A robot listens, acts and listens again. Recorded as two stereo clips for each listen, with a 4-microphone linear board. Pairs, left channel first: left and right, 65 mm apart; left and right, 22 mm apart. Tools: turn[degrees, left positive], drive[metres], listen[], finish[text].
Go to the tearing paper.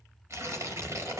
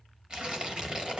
Thought: The tearing paper: about 50° right or 130° right.
Action: turn[-50]
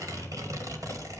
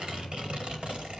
Thought: So it is at 75° right.
Action: turn[-75]
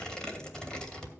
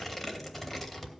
Thought: The tearing paper is now 15° left.
Action: turn[15]
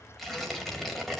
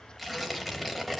Action: drive[1.0]
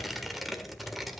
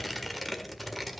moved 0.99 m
Action: drive[1.0]
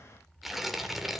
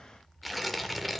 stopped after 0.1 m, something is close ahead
Action: finish[I am next to the tearing paper.]